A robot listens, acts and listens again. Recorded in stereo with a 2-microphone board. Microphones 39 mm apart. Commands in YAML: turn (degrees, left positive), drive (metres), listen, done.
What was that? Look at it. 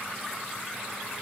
listen: true
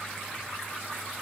listen: true
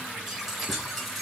turn: -30
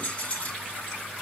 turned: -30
turn: 35
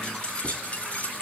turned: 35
turn: 40
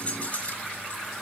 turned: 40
turn: 35
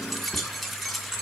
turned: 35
done: "Facing the keys jangling."